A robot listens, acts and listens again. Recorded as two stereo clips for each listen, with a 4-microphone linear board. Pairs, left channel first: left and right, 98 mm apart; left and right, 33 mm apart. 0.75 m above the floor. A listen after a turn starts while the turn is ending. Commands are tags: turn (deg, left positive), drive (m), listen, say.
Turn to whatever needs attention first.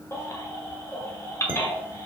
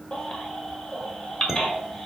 <turn deg="30"/>
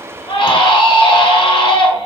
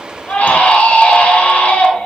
<turn deg="125"/>
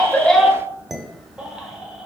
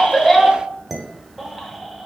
<listen/>
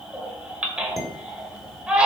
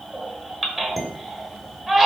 <turn deg="-10"/>
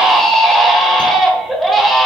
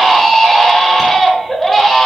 <say>Facing the baby crying, 1 to 2 m away.</say>